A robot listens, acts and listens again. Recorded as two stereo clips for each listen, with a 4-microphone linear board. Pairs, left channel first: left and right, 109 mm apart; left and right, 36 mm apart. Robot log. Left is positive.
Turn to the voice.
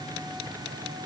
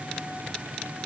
cmd idle
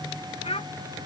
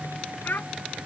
note: The child speaking: about 60° left or 120° left.
cmd yaw +60
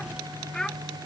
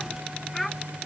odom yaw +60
end: Found it: a child speaking, straight ahead.